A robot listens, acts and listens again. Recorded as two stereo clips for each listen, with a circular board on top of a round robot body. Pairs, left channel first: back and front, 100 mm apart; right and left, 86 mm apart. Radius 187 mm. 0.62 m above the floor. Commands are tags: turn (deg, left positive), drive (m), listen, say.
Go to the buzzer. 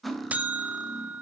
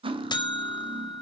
<turn deg="-75"/>
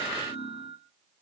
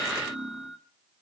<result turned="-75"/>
<drive m="1.0"/>
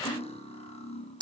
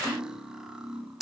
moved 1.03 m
<turn deg="10"/>
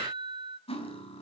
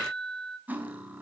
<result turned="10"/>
<drive m="1.0"/>
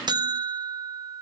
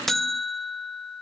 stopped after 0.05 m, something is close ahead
<say>I am next to the buzzer.</say>